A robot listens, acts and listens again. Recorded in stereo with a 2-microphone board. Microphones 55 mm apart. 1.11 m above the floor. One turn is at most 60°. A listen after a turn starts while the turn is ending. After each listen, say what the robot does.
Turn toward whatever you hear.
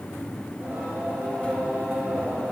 Turn 40° right.
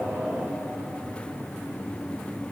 Keep listening.
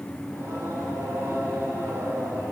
Turn 60° right.
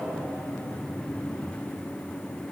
Turn 45° right.
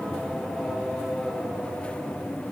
Found it: singing, straight ahead.